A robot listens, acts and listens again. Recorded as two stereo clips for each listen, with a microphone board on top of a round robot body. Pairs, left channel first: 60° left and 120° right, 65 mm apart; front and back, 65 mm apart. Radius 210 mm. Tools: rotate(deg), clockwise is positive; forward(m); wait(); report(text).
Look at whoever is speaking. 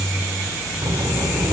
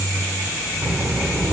rotate(110)
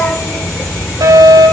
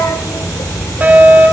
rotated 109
report("Found it: a child speaking, straight ahead, 2 to 4 m away.")